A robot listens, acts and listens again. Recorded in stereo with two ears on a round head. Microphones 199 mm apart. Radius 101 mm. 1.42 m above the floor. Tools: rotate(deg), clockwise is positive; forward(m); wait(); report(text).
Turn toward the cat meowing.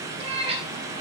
rotate(25)
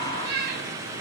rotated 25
rotate(130)
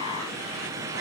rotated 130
wait()
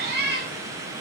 rotate(45)
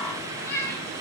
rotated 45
rotate(-10)
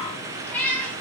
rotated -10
report("Found it: a cat meowing, straight ahead, over 4 m away.")